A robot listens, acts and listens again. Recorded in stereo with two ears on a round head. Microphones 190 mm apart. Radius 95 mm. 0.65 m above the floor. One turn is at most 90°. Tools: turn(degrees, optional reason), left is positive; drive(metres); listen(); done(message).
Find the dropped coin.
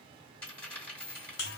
turn(degrees=30)
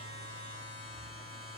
listen()
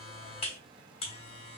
done("I heard a dropped coin, but can't make it out now. It was about 25° right or 145° left.")